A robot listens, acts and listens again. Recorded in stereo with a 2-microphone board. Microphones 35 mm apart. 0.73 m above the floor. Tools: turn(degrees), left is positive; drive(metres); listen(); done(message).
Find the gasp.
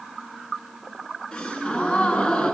turn(degrees=25)
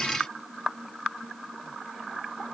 listen()
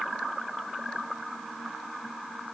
done("I heard a gasp, but can't make it out now. It was about straight ahead or 130° left.")